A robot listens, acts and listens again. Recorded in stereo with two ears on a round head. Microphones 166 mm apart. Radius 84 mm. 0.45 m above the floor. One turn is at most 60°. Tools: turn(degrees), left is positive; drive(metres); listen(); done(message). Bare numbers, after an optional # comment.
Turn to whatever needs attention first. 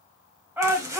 turn(-30)
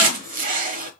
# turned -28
listen()
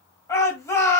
# So it is at 20° left.
turn(20)
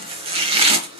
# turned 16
listen()
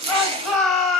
done("Found it: a shout, straight ahead.")